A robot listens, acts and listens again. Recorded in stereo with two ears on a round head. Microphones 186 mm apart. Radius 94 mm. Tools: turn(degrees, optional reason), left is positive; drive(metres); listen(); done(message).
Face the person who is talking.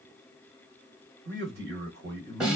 turn(degrees=-55, reason="The man speaking: about 55° right or 125° right.")
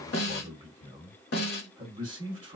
turn(degrees=-25, reason="So it is at 25° right.")
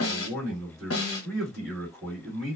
done("Found it: a man speaking, straight ahead, 1 to 2 m away.")